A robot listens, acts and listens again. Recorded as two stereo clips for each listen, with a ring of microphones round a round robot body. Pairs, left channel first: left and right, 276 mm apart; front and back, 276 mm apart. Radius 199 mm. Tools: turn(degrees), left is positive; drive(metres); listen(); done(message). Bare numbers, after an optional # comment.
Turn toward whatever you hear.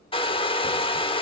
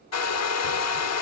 # The hair dryer: 20° left.
turn(20)
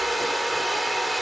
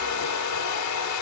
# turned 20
done("Found it: a hair dryer, straight ahead, under 1 m away.")